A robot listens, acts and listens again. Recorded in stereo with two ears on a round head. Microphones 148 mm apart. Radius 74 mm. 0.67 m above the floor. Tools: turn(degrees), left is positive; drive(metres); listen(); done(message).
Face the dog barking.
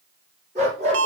turn(degrees=-40)
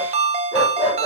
done("Found it: a dog barking, straight ahead.")